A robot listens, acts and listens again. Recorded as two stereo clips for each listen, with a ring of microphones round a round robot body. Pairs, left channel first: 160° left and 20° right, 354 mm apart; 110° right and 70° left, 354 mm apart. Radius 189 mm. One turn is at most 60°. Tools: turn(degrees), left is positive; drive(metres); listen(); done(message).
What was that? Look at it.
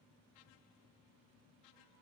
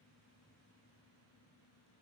listen()
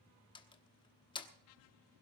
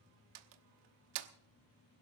turn(degrees=60)
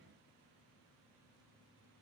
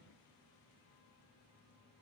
turn(degrees=20)
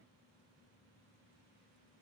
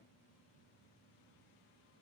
done("I heard a door slam from this way, but can't make it out now.")